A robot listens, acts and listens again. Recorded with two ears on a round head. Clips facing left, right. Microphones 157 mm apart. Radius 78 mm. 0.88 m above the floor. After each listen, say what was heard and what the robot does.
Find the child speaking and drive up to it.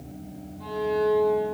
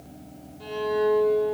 Keep listening.
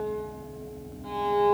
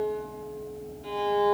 Keep listening.
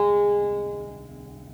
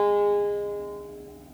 I can't make out a child speaking, only a violin.